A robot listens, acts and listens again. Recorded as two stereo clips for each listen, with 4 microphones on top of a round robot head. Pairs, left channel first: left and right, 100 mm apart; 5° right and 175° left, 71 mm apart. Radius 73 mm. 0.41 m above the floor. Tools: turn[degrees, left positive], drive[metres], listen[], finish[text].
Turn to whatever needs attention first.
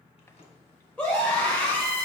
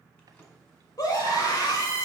Thought: The scream: 10° left.
Action: turn[10]
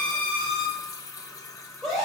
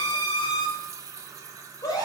Action: finish[Facing the scream.]